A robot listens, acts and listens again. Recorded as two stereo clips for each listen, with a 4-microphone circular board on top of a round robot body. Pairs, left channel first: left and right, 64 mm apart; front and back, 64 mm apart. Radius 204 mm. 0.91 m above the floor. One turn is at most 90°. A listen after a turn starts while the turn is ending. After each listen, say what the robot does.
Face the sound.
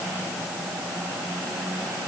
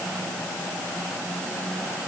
Keep listening.
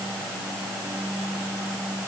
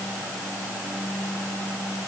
Keep listening.
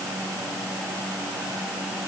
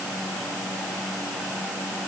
I can't make out anything to turn to.